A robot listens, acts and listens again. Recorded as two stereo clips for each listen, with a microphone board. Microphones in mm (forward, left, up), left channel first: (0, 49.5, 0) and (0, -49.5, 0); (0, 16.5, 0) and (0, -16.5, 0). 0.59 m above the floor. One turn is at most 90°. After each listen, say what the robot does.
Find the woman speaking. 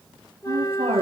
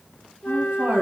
Turn 90° right.
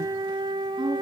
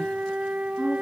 Found it: a woman speaking, straight ahead, over 4 m away.